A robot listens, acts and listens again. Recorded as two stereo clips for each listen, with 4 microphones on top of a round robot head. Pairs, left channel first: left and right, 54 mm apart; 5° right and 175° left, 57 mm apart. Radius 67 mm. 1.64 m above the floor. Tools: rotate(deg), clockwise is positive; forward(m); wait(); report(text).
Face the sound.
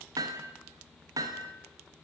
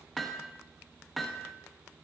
rotate(95)
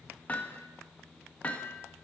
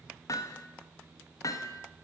rotate(-20)
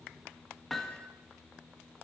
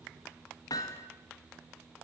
report("Facing the hammering, 1 to 2 m away.")